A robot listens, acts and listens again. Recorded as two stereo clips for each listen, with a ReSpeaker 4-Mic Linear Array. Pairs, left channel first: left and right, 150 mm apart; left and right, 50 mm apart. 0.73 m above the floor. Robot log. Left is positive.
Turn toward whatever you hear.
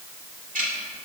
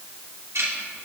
note: The ticking: about 65° right or 115° right.
cmd yaw -65
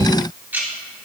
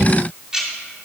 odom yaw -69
note: So it is at 15° right.
cmd yaw -15
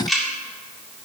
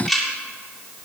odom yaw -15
end: Found it: ticking, straight ahead, 2 to 4 m away.